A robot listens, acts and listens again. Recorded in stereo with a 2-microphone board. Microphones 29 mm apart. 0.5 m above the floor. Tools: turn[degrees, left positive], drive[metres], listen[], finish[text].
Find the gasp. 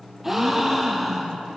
Action: turn[-30]
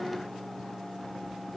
Action: listen[]
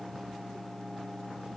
Action: finish[I heard a gasp, but can't make it out now. It was about 20° left or 140° right.]